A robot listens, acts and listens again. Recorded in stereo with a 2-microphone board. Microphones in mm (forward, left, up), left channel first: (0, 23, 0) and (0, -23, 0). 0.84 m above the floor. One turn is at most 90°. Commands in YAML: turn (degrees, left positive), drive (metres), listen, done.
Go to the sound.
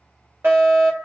turn: -55
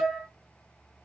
turn: -20
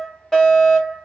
drive: 1.0
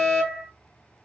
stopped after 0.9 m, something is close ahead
turn: 15
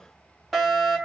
done: "Arrived at the fire alarm, straight ahead."